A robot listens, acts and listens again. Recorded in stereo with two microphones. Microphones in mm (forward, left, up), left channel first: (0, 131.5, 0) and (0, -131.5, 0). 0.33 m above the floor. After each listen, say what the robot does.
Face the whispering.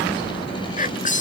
Turn 30° left.
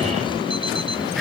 Keep listening.
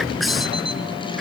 Keep listening.
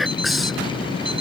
Facing the whispering.